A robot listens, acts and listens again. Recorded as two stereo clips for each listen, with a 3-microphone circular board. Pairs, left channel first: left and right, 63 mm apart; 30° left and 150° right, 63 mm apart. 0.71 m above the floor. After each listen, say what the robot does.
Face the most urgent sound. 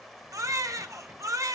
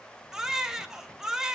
Turn 70° right.
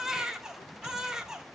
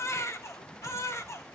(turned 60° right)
Turn 10° right.
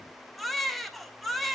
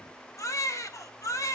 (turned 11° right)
Facing the baby crying.